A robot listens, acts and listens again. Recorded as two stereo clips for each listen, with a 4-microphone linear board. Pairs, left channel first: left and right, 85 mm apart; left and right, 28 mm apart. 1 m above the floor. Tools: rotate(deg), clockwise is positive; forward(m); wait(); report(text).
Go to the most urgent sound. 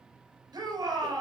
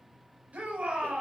rotate(55)
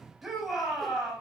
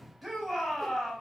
forward(1.0)
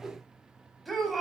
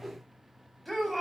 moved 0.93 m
forward(1.0)
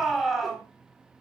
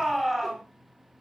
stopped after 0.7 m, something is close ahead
report("Blocked. The shout is further on, straight ahead.")